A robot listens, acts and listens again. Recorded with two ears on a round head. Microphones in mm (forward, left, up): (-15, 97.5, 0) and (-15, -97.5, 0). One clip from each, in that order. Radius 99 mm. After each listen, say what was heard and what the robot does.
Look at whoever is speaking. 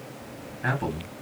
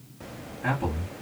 The man speaking: about 30° left or 150° left. Turn 30° left.
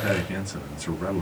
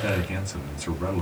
Found it: a man speaking, straight ahead.